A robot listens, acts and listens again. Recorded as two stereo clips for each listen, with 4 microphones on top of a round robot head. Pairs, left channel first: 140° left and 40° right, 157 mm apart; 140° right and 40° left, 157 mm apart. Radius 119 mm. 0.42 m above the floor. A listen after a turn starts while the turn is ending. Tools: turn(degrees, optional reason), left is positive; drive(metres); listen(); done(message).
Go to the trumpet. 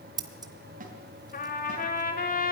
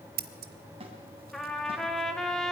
turn(degrees=135, reason="The trumpet: 135° left.")
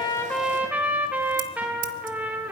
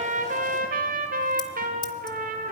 turn(degrees=40, reason="The trumpet is now 40° left.")
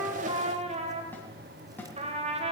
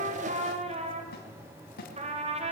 drive(metres=1.0)
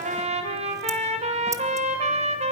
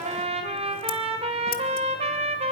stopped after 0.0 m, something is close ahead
done("Something is in my way. I am facing the trumpet but have not reached it.")